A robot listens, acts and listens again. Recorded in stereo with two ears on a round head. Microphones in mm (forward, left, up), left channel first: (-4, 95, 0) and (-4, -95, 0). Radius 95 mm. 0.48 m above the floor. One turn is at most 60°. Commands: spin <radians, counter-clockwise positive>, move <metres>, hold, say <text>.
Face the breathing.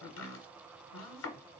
hold
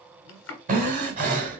spin -0.70
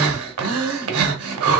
spin -1.05
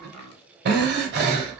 spin -0.87
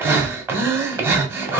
spin -0.17
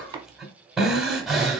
say Found it: breathing, straight ahead.